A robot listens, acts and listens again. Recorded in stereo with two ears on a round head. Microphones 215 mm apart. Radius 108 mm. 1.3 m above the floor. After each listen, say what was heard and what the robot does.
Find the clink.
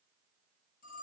Keep listening.
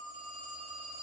Keep listening.
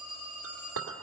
The clink: about 65° right or 115° right. Turn 65° right.
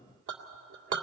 So it is at 50° right. Turn 50° right.
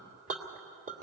The clink is now 35° right. Turn 35° right.
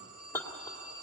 The clink is now 10° left. Turn 10° left.
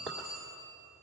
Facing the clink, 2 to 4 m away.